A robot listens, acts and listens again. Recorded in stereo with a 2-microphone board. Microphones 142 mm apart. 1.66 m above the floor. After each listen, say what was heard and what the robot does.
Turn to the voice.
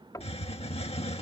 Keep listening.
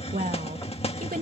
Turn 90° right.
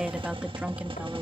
So it is at 10° right. Turn 10° right.
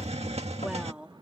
The woman speaking is now 10° right. Turn 10° right.
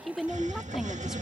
Facing the woman speaking.